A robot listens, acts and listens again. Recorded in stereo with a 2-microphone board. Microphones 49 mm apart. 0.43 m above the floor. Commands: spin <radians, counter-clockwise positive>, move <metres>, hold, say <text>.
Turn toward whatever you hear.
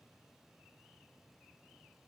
hold
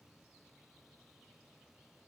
hold
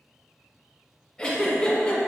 spin 0.52
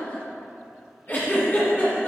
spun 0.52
spin 2.27
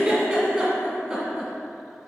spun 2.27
spin -0.35
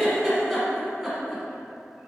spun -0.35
say Found it: a giggle, straight ahead.